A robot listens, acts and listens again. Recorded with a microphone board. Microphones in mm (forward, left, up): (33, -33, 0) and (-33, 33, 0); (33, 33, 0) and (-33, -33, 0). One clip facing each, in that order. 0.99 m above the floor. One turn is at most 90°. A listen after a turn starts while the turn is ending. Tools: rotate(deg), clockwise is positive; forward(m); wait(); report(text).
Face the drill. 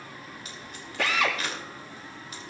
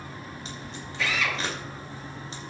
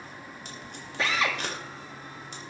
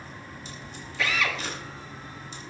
rotate(15)
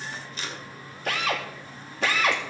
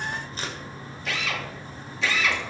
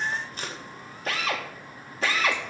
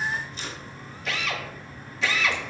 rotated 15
report("Facing the drill, 1 to 2 m away.")